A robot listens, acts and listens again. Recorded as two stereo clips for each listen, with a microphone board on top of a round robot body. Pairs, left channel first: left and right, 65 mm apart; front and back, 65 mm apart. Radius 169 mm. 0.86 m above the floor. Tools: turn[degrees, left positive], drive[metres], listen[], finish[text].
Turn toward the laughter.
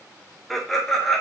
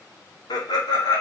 Action: finish[Facing the laughter, 2 to 4 m away.]